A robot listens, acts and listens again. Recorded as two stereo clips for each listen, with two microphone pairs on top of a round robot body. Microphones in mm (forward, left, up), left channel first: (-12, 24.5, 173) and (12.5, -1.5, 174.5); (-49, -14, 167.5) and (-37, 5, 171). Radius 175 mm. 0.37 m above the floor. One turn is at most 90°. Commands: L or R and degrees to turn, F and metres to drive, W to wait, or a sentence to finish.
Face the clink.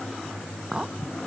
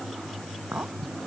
L25
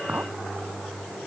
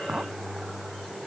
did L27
Found it: a clink, straight ahead.